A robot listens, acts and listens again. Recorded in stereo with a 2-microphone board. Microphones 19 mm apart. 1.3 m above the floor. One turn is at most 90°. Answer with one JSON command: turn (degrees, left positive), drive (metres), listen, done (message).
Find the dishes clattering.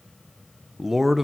{"listen": true}
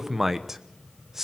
{"listen": true}
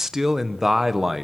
{"done": "I can't make out dishes clattering, only a man speaking."}